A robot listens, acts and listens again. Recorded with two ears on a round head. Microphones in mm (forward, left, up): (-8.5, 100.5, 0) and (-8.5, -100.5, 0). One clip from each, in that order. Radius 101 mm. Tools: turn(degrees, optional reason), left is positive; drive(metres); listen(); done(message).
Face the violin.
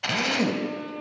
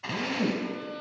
turn(degrees=-40, reason="The violin: about 40° right or 140° right.")
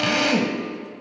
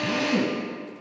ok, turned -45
listen()
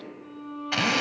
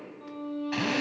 turn(degrees=-90, reason="So it is at 90° right.")
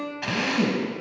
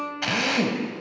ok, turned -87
done("Facing the violin.")